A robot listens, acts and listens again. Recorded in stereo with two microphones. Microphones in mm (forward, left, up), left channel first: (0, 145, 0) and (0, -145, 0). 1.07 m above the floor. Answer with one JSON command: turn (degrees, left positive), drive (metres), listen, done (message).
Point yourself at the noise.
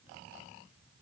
{"listen": true}
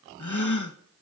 {"turn": 90}
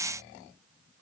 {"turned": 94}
{"done": "Facing where the gasp came from. I can't hear it now."}